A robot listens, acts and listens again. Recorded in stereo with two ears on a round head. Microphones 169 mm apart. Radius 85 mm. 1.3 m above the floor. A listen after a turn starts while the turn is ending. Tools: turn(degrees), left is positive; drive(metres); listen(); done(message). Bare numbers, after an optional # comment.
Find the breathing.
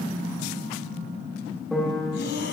# The breathing: about 60° left or 120° left.
turn(60)
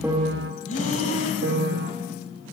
# So it is at 45° left.
turn(45)
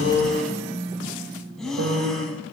done("Facing the breathing, 2 to 4 m away.")